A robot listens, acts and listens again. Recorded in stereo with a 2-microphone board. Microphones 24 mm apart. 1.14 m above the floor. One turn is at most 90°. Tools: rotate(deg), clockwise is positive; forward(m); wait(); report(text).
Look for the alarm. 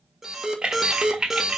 rotate(30)
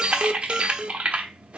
rotate(90)
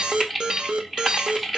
rotate(40)
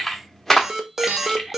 rotate(25)
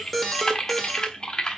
report("Found it: an alarm, straight ahead.")